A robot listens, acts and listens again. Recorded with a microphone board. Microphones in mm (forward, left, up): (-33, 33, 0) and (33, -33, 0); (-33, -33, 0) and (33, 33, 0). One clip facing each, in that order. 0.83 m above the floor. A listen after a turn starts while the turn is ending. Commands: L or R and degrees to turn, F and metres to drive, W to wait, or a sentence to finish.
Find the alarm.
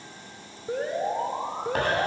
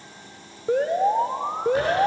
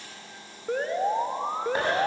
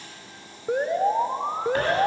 R30
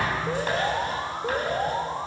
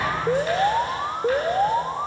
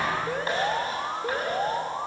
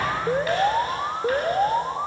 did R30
R15
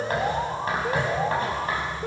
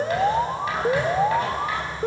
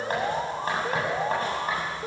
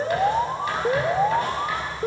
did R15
Found it: an alarm, straight ahead.